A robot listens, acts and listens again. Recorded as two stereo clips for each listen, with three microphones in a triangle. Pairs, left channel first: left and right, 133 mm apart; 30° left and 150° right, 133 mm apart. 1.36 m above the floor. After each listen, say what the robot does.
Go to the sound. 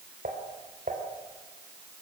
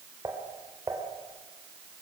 Turn 85° right.
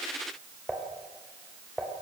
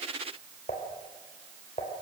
Drive 1.0 m forward.
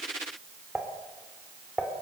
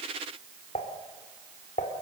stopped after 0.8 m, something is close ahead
Something is in my way. I am facing the dishes clattering but have not reached it.